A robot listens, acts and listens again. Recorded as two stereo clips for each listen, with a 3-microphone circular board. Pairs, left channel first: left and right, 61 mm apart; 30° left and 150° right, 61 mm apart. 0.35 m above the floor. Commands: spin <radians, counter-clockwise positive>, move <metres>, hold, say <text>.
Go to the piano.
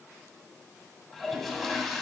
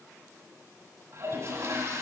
hold
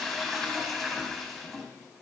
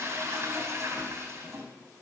hold
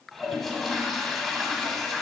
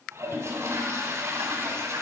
say I can't make out a piano to turn to.